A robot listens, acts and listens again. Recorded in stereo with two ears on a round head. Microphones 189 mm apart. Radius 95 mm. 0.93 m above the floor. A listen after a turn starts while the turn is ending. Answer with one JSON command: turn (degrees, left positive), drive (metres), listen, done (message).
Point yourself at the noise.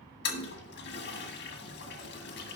{"turn": 60}
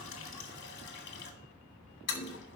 {"turn": 55}
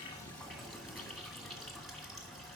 {"done": "Found it: a toilet flushing, straight ahead."}